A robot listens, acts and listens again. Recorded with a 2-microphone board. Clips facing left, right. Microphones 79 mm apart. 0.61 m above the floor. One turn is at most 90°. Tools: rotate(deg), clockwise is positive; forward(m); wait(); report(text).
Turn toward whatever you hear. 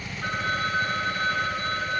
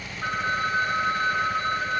rotate(20)
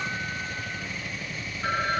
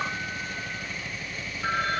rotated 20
report("Found it: a phone ringing, straight ahead, over 4 m away.")